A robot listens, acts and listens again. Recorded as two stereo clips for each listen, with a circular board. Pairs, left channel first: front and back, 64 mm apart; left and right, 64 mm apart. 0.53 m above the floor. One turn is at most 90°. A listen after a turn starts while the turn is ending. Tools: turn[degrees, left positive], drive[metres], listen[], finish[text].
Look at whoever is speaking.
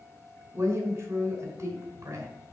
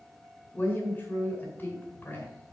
Thought: The woman speaking: 145° left.
Action: turn[90]
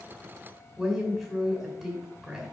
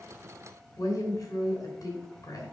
Thought: The woman speaking is now 100° left.
Action: turn[90]
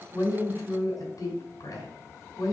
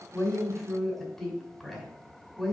Action: finish[Found it: a woman speaking, straight ahead, 2 to 4 m away.]